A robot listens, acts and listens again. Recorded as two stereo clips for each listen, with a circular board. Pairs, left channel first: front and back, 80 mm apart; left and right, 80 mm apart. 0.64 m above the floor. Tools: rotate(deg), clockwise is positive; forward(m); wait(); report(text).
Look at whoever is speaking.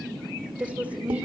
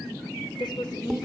rotate(-110)
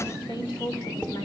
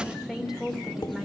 report("Facing the woman speaking.")